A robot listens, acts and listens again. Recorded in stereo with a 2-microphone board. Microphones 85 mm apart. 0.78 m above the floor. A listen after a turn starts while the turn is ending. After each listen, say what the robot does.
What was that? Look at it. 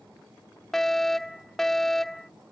Turn 30° left.
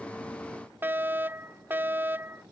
Turn 25° right.
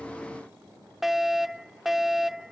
Found it: a fire alarm, straight ahead.